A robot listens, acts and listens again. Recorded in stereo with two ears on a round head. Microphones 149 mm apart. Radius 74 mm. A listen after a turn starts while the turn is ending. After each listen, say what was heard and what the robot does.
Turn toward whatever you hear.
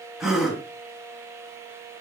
Turn 30° left.
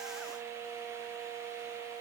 Keep listening.
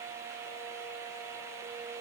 I heard a gasp, but can't make it out now. It was about 30° right or 150° left.